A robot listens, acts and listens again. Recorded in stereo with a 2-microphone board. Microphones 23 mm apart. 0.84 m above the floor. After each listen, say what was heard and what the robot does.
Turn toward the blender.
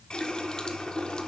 Keep listening.
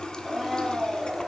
The blender: about 20° right or 160° right. Turn 20° right.
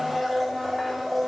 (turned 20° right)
Found it: a blender, straight ahead.